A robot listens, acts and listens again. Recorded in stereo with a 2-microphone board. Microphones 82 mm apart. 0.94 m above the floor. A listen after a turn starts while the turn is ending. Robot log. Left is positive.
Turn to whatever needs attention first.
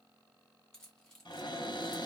cmd idle
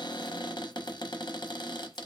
cmd idle
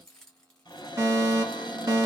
note: The fire alarm: about 35° right or 145° right.
cmd yaw -35
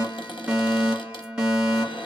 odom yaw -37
note: So it is at 10° right.
cmd yaw -10
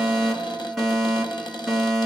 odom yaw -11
end: Facing the fire alarm.